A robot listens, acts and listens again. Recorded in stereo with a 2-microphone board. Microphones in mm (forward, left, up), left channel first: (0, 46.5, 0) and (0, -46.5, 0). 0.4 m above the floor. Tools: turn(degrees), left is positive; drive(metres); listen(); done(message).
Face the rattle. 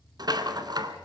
turn(degrees=-50)
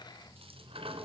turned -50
turn(degrees=-85)
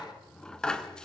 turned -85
turn(degrees=10)
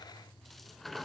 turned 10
done("Found it: a rattle, straight ahead.")